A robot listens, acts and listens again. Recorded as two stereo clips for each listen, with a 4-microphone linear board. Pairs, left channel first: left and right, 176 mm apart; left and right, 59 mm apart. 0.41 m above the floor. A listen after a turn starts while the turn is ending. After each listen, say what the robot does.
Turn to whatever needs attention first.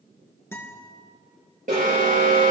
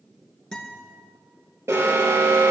Turn 50° right.
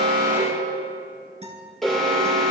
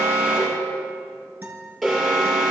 Facing the alarm.